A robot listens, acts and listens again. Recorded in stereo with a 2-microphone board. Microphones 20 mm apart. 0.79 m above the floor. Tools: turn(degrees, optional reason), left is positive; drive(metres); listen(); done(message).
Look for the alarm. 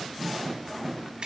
listen()
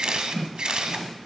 listen()
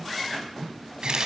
done("I can't make out an alarm to turn to.")